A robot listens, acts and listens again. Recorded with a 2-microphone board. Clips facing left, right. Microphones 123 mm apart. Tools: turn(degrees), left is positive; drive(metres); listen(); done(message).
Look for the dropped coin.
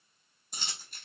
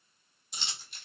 turn(degrees=50)
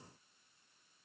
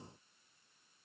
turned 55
listen()
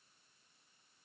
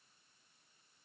done("I heard a dropped coin, but can't make it out now. It was about 5° right or 75° left.")